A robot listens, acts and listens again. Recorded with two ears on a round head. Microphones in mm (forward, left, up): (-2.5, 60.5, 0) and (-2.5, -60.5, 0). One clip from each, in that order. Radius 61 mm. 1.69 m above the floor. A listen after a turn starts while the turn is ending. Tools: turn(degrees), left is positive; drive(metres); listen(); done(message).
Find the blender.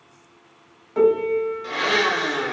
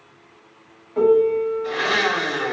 turn(degrees=35)
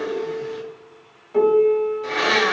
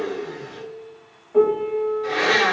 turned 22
turn(degrees=15)
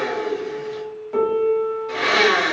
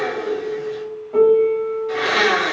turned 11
done("Found it: a blender, straight ahead.")